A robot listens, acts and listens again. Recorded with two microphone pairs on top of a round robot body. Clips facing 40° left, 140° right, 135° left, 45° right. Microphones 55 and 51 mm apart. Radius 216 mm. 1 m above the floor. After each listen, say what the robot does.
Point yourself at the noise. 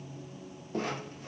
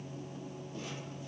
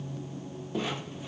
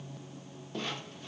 Turn 60° left.
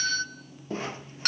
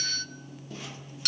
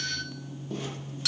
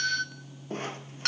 Facing the doorbell.